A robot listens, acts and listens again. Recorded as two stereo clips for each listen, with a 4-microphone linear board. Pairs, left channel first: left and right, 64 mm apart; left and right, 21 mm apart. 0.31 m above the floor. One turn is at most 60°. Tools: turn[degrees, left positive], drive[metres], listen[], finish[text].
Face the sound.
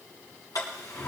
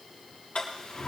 Action: turn[60]
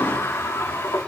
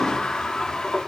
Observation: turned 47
Thought: So it is at 55° left.
Action: turn[55]
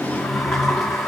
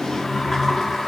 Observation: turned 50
Action: finish[Found it: a sliding door, straight ahead, over 4 m away.]